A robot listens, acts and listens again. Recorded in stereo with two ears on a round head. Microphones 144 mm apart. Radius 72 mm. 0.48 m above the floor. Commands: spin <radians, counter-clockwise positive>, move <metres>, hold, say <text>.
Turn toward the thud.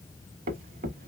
spin -1.05
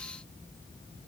hold
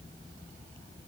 say I heard a thud, but can't make it out now. It was about straight ahead or 60° right.